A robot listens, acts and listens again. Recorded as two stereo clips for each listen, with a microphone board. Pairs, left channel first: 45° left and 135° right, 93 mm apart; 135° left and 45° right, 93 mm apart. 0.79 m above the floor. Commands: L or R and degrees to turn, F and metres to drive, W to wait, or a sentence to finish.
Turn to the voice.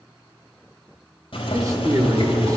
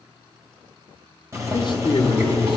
L170
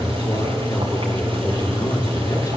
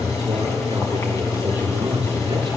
R10
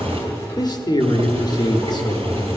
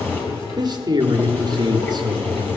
Facing the man speaking, 1 to 2 m away.